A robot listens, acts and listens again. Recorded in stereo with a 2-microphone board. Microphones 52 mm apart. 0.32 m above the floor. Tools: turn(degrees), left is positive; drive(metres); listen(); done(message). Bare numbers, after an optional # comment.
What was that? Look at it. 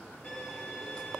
# The violin: about 20° left or 160° left.
turn(20)
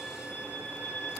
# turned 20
# So it is at 145° left.
turn(145)
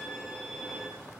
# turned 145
done("Found it: a violin, straight ahead, 2 to 4 m away.")